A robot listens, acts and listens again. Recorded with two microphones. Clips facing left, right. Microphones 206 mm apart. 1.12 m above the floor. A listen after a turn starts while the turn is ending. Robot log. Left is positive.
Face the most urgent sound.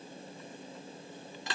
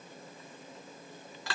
cmd idle
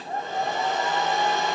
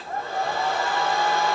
cmd idle
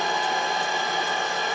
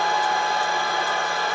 end: I can't make out anything urgent, only a hair dryer.